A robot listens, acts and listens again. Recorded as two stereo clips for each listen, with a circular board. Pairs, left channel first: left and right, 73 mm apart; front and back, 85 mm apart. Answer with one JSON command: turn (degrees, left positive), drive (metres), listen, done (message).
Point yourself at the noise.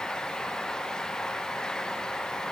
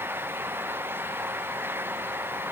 {"listen": true}
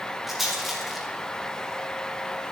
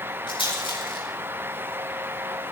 {"done": "Found it: a rattle, straight ahead, over 4 m away."}